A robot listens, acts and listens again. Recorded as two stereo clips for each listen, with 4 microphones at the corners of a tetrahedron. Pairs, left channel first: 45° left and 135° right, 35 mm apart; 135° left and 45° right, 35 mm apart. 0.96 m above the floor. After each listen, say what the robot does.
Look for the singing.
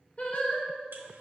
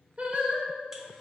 Found it: singing, straight ahead, 1 to 2 m away.